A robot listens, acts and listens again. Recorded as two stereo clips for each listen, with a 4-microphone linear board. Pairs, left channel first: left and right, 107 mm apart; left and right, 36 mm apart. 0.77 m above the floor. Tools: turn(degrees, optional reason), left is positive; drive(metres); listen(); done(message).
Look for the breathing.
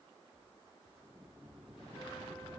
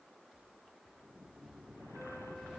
listen()
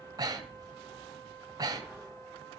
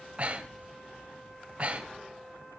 turn(degrees=-35, reason="The breathing: about 35° right or 145° right.")
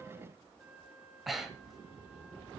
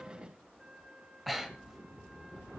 done("Facing the breathing, 2 to 4 m away.")